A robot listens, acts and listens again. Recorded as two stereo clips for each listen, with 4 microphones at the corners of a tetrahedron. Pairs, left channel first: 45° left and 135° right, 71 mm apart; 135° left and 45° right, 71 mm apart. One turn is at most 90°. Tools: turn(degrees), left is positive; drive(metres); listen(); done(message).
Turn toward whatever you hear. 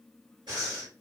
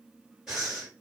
turn(degrees=-90)
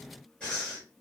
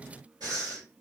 turn(degrees=-30)
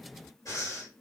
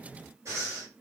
done("Found it: breathing, straight ahead, 2 to 4 m away.")